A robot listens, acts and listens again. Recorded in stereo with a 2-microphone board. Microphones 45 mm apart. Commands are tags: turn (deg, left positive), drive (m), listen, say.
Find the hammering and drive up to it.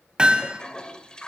<turn deg="-20"/>
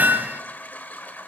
<turn deg="-135"/>
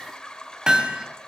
<turn deg="-15"/>
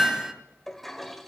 <drive m="1.0"/>
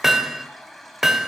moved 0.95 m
<turn deg="-10"/>
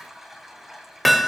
<drive m="1.0"/>
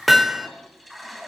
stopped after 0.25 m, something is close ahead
<say>I am next to the hammering.</say>